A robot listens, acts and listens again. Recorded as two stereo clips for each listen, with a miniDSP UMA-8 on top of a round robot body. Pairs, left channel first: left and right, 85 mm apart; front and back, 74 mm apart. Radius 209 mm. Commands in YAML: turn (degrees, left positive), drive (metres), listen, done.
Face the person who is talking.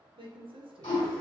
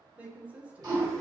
turn: -105
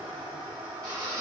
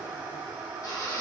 listen: true
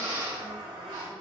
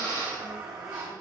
listen: true
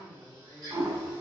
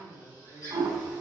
done: "Facing the woman speaking."